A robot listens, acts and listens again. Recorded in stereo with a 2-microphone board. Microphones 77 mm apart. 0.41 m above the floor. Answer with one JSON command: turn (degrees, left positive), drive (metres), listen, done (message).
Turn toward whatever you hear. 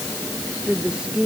{"turn": -30}
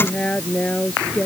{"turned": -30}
{"turn": 15}
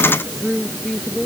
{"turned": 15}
{"done": "Facing the woman speaking."}